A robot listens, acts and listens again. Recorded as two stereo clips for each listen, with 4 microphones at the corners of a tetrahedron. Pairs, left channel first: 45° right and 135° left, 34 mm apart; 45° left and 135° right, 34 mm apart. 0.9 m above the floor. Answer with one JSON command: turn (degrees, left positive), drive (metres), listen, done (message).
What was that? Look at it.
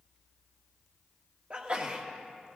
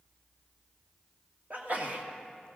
{"turn": -175}
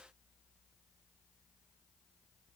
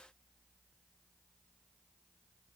{"done": "Facing where the sneeze came from. I can't hear it now."}